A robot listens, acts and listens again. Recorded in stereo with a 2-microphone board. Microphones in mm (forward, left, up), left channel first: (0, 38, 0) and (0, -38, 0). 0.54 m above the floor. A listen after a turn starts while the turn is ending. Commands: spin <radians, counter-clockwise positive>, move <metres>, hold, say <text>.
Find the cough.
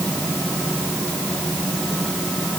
hold
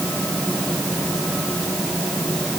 hold
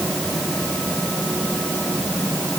say I can't make out a cough to turn to.